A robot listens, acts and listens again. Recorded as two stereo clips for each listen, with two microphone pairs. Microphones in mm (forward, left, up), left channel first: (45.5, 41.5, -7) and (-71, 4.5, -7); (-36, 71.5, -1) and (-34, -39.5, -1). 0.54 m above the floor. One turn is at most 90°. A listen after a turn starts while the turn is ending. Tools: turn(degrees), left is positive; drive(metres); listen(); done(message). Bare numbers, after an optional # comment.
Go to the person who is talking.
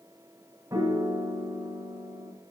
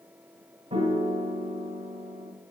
listen()
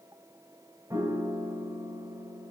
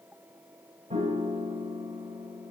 listen()
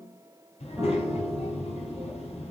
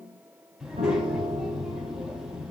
drive(1.0)
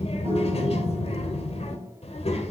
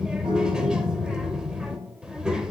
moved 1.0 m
drive(1.0)
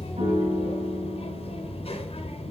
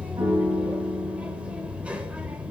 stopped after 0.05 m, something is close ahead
# The child speaking is now 10° right.
turn(-10)
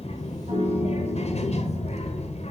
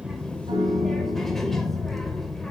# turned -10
done("I am next to the child speaking.")